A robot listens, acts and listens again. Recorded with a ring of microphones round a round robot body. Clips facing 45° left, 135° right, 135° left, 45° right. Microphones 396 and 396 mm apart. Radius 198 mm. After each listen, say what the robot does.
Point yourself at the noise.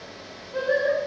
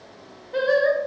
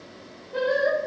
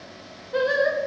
Turn 95° right.
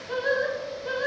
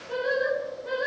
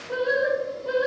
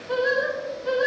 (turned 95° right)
Found it: singing, straight ahead.